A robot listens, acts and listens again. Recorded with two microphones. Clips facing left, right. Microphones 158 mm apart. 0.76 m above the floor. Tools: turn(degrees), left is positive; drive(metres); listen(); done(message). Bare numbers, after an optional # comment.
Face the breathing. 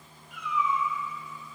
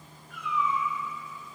listen()
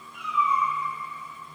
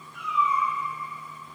listen()
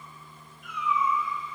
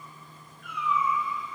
done("I can't make out breathing, only a cat meowing.")